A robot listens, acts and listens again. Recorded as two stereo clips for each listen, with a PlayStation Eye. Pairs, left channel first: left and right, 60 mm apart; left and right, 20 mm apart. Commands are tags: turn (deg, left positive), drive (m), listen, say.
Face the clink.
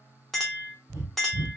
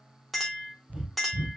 <turn deg="30"/>
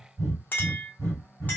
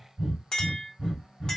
<turn deg="150"/>
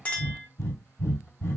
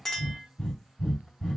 <turn deg="25"/>
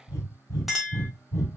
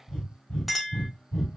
<say>Facing the clink.</say>